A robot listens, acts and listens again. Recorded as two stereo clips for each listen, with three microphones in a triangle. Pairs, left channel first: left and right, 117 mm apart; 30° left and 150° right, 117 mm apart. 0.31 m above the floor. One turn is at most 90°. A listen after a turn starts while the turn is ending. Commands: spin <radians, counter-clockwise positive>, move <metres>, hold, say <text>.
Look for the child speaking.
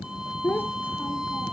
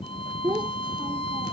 spin 1.57
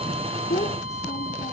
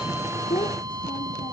spin 1.31
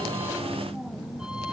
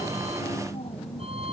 hold
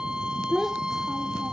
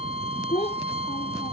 say Found it: a child speaking, straight ahead.